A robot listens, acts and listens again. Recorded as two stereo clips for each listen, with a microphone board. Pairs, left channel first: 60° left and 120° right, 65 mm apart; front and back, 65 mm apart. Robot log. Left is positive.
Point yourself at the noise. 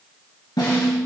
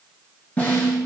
note: The snare drum: 65° left.
cmd yaw +65
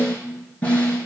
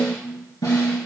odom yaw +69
end: Facing the snare drum, 2 to 4 m away.